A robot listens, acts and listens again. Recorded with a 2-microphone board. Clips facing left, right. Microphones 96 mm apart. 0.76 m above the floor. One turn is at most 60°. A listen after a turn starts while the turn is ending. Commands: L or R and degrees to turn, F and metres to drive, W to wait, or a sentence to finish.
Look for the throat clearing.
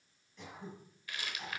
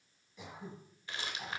R30
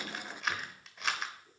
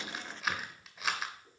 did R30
R60
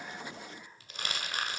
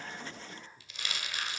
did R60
R60
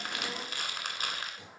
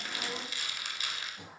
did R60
R25
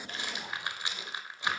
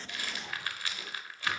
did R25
W
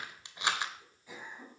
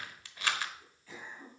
L15
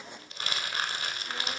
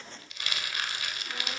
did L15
W
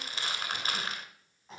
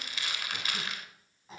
Facing the throat clearing, 2 to 4 m away.